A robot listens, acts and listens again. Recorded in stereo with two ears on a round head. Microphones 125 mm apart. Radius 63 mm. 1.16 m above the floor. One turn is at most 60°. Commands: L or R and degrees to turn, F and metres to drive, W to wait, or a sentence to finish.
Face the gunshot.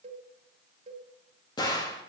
L30
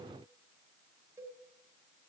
W
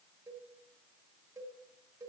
I heard a gunshot, but can't make it out now. It was about straight ahead or 120° left.